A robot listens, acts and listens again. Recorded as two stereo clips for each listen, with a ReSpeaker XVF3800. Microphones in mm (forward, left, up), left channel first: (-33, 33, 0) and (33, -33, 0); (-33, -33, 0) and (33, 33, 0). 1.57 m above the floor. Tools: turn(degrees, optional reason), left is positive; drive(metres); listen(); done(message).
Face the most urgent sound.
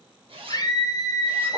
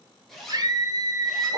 turn(degrees=90, reason="The scream: 90° left.")
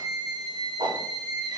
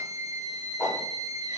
done("Found it: a scream, straight ahead.")